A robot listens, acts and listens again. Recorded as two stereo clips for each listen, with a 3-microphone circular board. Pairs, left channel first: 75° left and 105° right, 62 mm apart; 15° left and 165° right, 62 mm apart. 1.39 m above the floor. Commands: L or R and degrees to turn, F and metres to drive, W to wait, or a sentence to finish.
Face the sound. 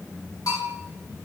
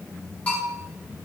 L80
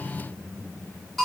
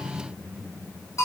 R10
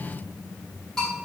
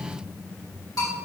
Found it: a bell, straight ahead, 2 to 4 m away.